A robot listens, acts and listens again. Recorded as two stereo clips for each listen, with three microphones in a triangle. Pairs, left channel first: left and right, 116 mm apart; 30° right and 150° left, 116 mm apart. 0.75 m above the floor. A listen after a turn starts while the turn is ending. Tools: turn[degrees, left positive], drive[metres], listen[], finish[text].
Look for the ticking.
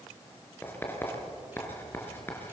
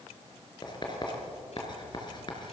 Action: listen[]
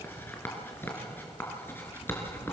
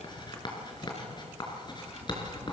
Action: listen[]
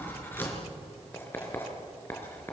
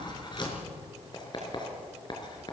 Action: finish[I can't make out ticking, only writing.]